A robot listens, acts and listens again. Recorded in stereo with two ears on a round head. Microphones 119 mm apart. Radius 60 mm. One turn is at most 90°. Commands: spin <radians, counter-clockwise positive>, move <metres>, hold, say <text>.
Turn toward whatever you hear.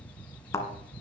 spin 0.35
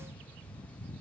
hold
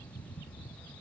say I heard a thud, but can't make it out now. It was about straight ahead or 140° left.